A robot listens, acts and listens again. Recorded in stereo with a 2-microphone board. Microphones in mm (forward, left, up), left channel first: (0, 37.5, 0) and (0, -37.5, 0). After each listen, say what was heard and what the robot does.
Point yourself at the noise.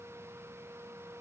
Keep listening.
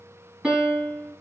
Turn 30° right.
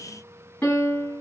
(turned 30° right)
So it is at 20° left. Turn 20° left.
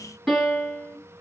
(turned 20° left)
Found it: a piano, straight ahead, 1 to 2 m away.